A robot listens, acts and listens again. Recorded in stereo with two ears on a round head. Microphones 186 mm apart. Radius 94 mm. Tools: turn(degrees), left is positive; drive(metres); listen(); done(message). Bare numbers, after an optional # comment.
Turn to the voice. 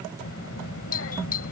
# The child speaking: about 65° left or 115° left.
turn(65)
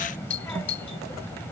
# So it is at 10° left.
turn(10)
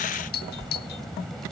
done("Facing the child speaking.")